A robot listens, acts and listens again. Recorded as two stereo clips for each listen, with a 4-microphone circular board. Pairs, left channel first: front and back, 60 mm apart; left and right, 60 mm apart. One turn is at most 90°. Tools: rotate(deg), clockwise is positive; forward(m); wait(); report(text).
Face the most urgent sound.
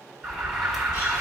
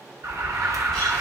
rotate(90)
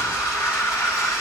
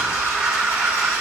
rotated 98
report("Facing the alarm, 1 to 2 m away.")